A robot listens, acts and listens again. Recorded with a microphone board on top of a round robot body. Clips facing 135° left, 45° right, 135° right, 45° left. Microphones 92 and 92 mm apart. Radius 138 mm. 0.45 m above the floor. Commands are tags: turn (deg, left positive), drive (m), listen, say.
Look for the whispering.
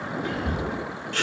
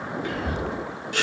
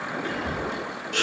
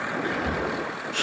<turn deg="80"/>
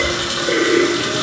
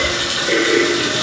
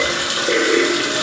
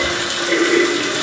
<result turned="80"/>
<listen/>
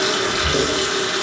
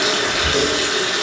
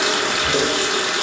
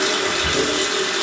<turn deg="30"/>
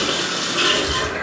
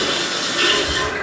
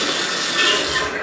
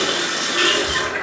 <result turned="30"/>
<listen/>
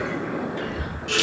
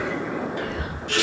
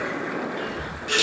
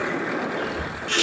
<turn deg="-10"/>
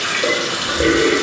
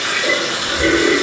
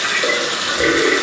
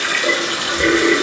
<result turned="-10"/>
<listen/>
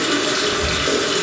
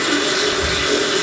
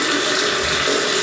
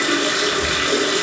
<say>Facing the whispering.</say>